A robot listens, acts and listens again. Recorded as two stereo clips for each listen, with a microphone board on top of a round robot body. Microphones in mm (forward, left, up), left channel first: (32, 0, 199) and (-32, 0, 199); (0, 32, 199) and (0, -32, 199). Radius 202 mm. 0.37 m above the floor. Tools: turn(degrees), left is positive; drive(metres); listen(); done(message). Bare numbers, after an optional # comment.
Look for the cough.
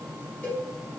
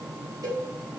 listen()
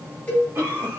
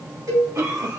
# The cough: 125° right.
turn(-125)
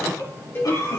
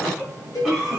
done("Facing the cough.")